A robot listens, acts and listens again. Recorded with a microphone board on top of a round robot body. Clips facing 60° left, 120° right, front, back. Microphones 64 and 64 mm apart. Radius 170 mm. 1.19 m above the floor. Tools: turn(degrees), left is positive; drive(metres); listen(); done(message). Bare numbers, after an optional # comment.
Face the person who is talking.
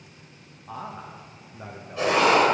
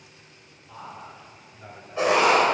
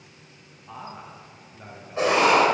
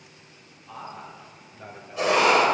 # The man speaking: 95° left.
turn(95)
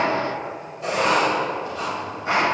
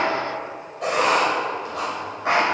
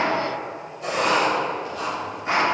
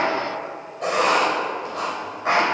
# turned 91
listen()
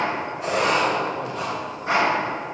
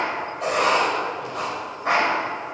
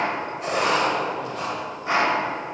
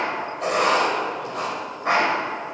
listen()
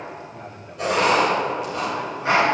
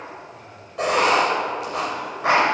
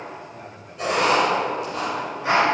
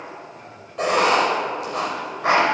# The man speaking is now 75° left.
turn(75)
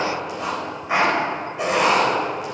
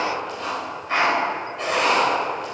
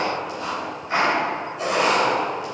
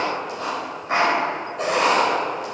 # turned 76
listen()
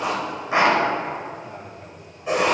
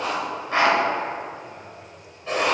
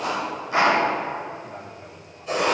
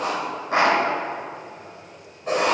listen()
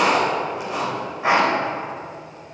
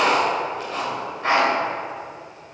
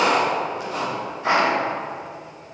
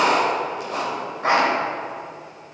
done("I heard a man speaking from this way, but can't make it out now.")